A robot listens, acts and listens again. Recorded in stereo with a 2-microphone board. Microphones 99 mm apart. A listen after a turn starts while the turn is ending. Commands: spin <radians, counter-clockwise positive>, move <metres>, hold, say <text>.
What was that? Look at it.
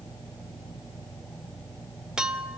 spin -0.52
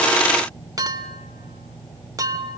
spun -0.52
spin -2.44
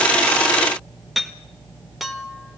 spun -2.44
say Facing the clink.